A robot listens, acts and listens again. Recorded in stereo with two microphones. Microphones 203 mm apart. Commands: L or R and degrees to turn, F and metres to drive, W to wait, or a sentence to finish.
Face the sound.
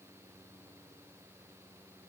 W
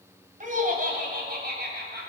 R55
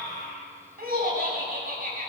R45
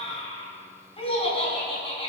L30
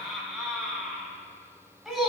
Facing the laughter, 2 to 4 m away.